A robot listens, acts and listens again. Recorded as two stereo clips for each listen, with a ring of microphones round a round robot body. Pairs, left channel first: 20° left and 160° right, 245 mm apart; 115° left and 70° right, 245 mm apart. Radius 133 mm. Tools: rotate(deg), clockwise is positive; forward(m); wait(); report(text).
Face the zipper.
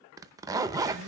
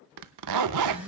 rotate(80)
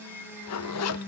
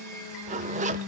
report("Facing the zipper.")